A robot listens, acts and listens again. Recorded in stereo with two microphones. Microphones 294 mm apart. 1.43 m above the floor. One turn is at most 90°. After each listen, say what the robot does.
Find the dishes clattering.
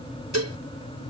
Turn 60° right.
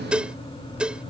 Facing the dishes clattering.